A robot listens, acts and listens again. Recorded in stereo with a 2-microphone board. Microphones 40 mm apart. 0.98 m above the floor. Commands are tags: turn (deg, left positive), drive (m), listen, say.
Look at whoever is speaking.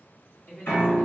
<turn deg="45"/>
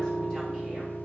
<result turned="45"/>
<listen/>
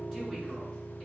<listen/>
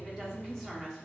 <say>Facing the woman speaking.</say>